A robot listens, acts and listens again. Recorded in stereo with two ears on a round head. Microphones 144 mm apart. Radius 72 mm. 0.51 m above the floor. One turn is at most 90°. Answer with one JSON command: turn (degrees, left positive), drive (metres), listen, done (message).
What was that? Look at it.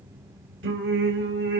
{"turn": -90}
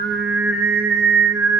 {"turn": -15}
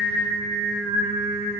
{"turn": -10}
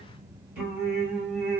{"turn": -10}
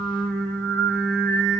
{"done": "Found it: singing, straight ahead."}